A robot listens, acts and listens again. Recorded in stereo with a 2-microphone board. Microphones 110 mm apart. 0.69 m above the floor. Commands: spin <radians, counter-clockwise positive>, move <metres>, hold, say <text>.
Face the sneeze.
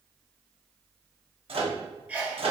spin -0.52
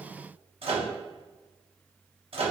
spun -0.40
hold
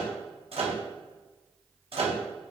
say I heard a sneeze, but can't make it out now. It was about 10° left or 145° right.